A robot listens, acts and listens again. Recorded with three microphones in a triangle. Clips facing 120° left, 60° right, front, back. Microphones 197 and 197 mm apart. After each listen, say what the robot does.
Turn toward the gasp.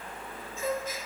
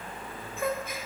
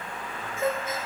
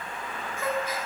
Turn 65° right.
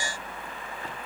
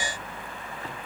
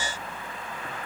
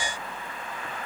Facing where the gasp came from. I can't hear it now.